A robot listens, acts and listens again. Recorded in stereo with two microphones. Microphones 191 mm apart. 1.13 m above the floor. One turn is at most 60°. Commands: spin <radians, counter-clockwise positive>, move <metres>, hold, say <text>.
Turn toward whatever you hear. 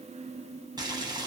spin -0.35
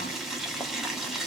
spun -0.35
say Facing the boiling.